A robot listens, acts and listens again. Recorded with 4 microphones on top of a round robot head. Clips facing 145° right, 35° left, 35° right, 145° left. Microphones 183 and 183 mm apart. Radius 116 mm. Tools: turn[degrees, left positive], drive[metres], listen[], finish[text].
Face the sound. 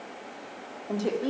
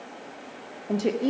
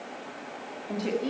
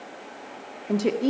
Thought: The woman speaking: 105° left.
Action: turn[105]
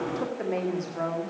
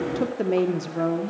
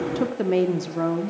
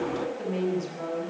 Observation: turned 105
Thought: The woman speaking is now 20° right.
Action: turn[-20]
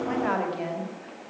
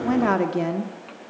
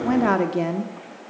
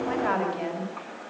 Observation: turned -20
Action: finish[Facing the woman speaking, 1 to 2 m away.]